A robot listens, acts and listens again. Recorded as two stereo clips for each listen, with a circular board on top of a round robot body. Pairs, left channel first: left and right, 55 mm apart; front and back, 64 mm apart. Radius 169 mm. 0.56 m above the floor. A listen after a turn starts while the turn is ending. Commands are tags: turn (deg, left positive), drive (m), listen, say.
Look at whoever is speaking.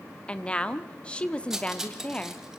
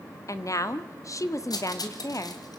<turn deg="20"/>
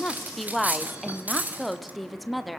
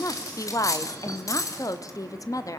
<say>Facing the woman speaking.</say>